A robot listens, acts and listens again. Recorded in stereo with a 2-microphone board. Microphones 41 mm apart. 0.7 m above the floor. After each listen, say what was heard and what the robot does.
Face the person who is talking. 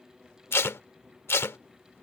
Keep listening.
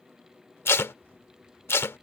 Keep listening.
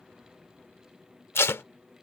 I can't make out anyone speaking to turn to.